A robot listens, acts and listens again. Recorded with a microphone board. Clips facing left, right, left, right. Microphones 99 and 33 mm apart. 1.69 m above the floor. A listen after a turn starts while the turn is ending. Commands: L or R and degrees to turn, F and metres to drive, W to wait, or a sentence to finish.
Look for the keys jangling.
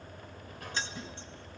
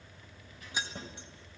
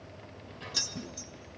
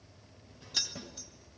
R30
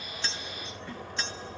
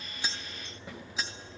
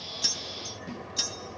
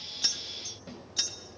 R30
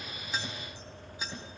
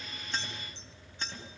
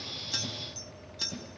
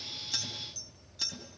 Found it: keys jangling, straight ahead.